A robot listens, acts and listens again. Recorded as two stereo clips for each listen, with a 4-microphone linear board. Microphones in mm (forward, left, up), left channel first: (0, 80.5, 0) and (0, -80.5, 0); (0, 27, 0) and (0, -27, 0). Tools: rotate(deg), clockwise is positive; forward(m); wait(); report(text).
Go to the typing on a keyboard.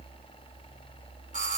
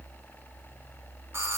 wait()
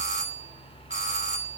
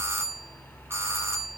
wait()
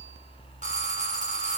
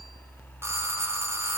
report("I can't make out typing on a keyboard to turn to.")